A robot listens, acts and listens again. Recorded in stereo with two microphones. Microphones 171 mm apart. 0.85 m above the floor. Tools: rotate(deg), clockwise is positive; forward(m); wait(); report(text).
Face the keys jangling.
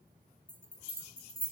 wait()
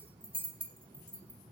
wait()
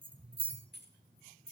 rotate(-90)
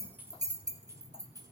rotate(20)
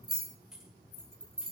report("Found it: keys jangling, straight ahead.")